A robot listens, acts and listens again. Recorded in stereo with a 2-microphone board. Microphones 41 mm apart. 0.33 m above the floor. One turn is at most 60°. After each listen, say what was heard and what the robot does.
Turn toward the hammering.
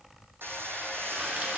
Turn 60° right.
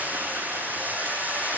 So it is at 45° right. Turn 45° right.
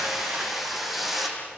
Found it: hammering, straight ahead.